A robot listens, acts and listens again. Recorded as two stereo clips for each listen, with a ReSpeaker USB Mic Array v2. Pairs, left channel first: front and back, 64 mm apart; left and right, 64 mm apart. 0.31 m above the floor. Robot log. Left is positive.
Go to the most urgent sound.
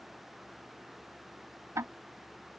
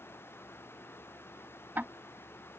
cmd idle
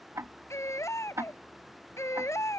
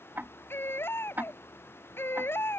note: The baby crying: 40° left.
cmd yaw +40
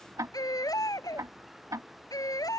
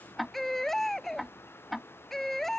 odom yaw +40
cmd fwd 1.0
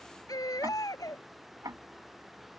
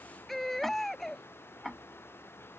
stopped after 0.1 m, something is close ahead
end: Something is in my way. I am facing the baby crying but have not reached it.